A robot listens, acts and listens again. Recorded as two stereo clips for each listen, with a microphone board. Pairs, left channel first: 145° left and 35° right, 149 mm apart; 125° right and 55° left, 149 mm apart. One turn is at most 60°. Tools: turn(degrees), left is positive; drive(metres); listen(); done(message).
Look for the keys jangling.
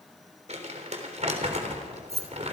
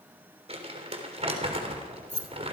turn(degrees=-60)
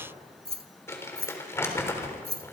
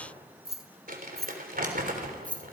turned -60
turn(degrees=-45)
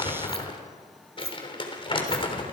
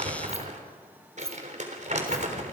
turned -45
turn(degrees=-40)
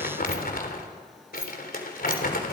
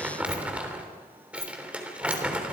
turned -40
done("Facing the keys jangling, 2 to 4 m away.")